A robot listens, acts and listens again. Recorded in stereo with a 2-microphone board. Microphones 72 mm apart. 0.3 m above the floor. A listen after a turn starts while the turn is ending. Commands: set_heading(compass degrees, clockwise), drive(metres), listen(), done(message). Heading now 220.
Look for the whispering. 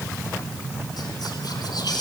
set_heading(150)
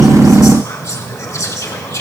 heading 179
set_heading(129)
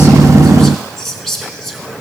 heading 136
done("Found it: whispering, straight ahead.")